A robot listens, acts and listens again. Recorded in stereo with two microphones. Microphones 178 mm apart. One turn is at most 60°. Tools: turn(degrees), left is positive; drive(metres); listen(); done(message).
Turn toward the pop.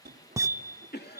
turn(degrees=-20)
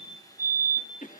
listen()
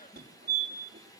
done("I heard a pop, but can't make it out now. It was about straight ahead or 140° right.")